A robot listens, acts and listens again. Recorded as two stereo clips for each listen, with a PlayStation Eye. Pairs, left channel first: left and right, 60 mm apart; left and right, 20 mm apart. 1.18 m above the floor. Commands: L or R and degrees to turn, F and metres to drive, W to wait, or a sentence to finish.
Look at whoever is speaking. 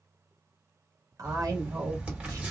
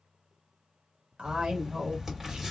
R90
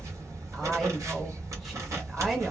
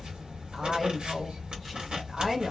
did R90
Facing the woman speaking.